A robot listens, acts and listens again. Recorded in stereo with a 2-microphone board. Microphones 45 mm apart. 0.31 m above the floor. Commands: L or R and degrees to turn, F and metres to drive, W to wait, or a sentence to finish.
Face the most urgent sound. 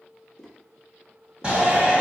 R25
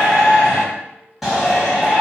Facing the shout, 1 to 2 m away.